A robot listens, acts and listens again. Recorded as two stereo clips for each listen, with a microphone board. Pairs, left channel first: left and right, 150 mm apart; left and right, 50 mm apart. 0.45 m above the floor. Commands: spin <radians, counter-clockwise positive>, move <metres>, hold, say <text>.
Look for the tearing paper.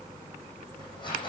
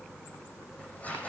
spin 0.52
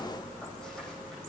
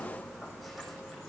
hold
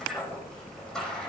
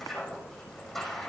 say Facing the tearing paper, over 4 m away.